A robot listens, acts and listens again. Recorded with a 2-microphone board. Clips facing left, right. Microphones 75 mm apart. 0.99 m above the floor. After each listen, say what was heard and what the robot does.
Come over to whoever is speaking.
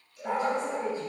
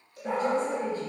Turn 30° left.
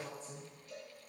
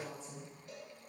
So it is at 135° left. Turn 135° left.
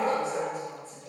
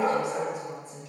The woman speaking is now 10° right. Turn 10° right.
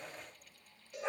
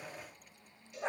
Keep listening.
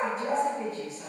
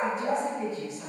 Drive 1.0 m forward.
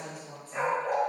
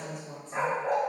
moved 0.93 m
The woman speaking is now 10° left. Turn 10° left.
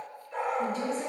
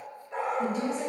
Drive 1.0 m forward.
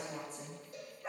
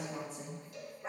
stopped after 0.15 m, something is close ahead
I am next to the woman speaking.